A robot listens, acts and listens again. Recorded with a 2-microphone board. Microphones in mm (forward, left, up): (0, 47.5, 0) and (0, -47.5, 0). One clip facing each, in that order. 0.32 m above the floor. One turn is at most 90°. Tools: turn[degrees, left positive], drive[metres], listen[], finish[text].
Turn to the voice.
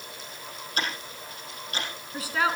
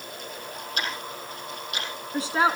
Thought: The woman speaking: about 25° right or 155° right.
Action: turn[-25]
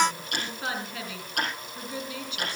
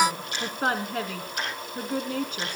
Thought: So it is at 125° right.
Action: turn[-90]
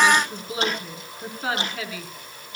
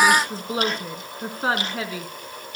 Thought: The woman speaking is now 40° right.
Action: turn[-40]
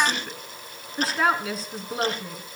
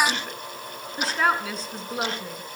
Action: finish[Found it: a woman speaking, straight ahead, 2 to 4 m away.]